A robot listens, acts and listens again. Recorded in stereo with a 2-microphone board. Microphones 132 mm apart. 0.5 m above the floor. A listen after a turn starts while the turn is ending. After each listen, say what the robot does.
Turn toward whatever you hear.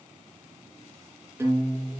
Turn 15° right.
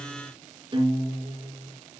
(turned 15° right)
Turn 145° right.
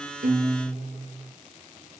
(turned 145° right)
Turn 60° right.
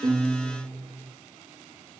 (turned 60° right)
Turn 15° left.
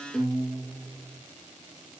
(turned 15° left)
Facing the guitar, over 4 m away.